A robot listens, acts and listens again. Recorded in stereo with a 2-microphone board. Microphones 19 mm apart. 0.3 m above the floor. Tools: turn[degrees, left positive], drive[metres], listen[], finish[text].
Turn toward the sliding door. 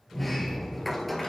Action: turn[30]
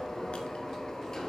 Thought: So it is at 150° left.
Action: turn[150]
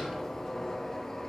Thought: The sliding door is now 30° left.
Action: turn[30]
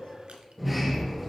Action: finish[Facing the sliding door.]